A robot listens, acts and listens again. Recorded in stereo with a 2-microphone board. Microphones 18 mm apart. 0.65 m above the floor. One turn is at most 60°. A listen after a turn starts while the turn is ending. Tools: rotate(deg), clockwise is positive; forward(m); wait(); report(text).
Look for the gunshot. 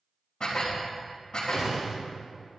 rotate(45)
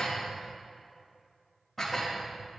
wait()
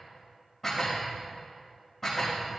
report("I heard a gunshot, but can't make it out now. It was about straight ahead or 90° right.")